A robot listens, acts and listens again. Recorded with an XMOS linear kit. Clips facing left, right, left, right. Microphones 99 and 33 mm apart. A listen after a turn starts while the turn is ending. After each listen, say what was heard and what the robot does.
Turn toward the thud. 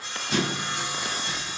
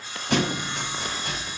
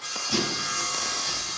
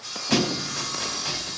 The thud: about 65° right or 115° right. Turn 65° right.
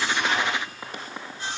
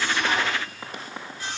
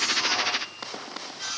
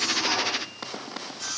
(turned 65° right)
Keep listening.
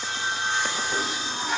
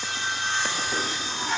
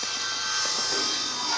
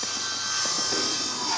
I heard a thud, but can't make it out now. It was about straight ahead or 50° right.